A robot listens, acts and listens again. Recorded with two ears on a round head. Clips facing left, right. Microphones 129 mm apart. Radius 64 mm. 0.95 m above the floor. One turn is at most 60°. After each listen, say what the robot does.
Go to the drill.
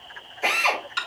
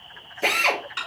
Turn 45° right.
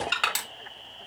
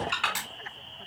Keep listening.
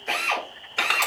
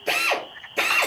Turn 60° right.
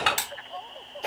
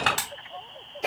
Turn 15° right.
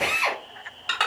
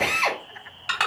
Drive 1.0 m forward.
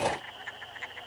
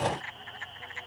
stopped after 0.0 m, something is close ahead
Keep listening.
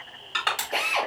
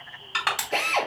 Blocked. The drill is further on, straight ahead.